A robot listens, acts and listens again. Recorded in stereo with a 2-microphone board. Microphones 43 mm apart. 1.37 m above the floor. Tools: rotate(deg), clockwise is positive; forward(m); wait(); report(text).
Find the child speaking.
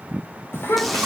rotate(-90)
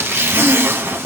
wait()
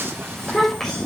report("Facing the child speaking, over 4 m away.")